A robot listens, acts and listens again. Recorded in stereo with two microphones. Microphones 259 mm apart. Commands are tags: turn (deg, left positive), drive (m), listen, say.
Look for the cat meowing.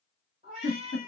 <turn deg="-25"/>
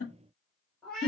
<say>Facing the cat meowing.</say>